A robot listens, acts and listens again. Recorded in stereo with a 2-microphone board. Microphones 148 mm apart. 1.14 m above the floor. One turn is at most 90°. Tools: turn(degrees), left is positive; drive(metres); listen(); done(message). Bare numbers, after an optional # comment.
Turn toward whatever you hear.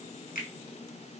# The finger snap: about 75° left or 105° left.
turn(75)
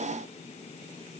listen()
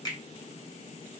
# So it is at 25° left.
turn(25)
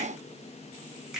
done("Facing the finger snap.")